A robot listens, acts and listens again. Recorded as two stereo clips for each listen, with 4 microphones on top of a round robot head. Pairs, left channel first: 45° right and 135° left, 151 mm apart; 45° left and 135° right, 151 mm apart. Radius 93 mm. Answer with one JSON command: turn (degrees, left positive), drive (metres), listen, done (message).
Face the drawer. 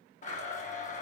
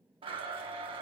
{"listen": true}
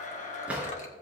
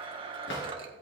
{"turn": 55}
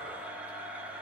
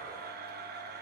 {"listen": true}
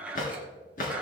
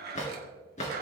{"done": "Found it: a drawer, straight ahead, 2 to 4 m away."}